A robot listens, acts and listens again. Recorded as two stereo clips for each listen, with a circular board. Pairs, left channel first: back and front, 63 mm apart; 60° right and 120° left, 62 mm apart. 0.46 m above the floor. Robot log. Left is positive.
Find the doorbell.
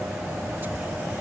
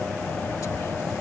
cmd idle
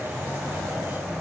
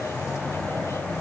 cmd idle
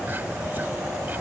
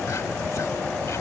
end: I can't make out a doorbell.